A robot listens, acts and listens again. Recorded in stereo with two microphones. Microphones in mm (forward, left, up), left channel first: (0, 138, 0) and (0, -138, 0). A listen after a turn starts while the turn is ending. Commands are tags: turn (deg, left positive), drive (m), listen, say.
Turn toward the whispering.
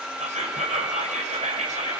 <turn deg="-25"/>
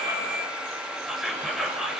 <say>Facing the whispering.</say>